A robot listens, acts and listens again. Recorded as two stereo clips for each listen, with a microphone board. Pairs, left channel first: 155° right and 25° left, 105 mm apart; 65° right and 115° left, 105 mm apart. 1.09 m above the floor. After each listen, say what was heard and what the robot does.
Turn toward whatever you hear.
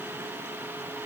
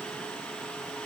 Keep listening.
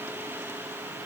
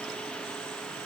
Keep listening.
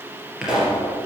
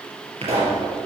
The pop: 105° left. Turn 105° left.
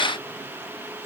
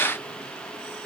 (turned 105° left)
Facing where the pop came from. I can't hear it now.